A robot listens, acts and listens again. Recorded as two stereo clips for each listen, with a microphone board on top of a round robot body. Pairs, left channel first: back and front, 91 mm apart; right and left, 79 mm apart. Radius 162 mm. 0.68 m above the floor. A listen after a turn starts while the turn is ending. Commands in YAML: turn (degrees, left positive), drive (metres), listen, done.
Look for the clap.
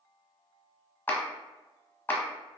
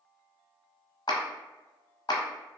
turn: -110
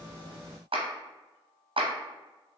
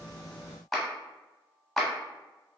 done: "Facing the clap, 1 to 2 m away."